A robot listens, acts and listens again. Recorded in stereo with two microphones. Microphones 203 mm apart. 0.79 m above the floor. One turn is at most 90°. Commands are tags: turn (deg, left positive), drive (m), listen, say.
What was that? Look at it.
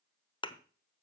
<turn deg="25"/>
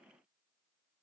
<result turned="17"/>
<listen/>
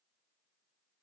<say>I heard a thud, but can't make it out now. It was about 5° left or 140° left.</say>